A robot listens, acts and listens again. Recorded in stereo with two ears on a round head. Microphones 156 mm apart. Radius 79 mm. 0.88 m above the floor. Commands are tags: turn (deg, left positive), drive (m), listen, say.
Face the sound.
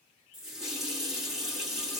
<turn deg="-30"/>
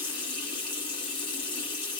<turn deg="25"/>
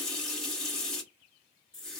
<say>Found it: a running tap, straight ahead.</say>